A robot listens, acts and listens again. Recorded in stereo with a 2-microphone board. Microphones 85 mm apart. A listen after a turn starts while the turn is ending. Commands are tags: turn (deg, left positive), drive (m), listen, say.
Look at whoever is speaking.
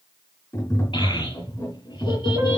<turn deg="70"/>
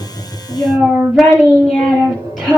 <say>Found it: a child speaking, straight ahead.</say>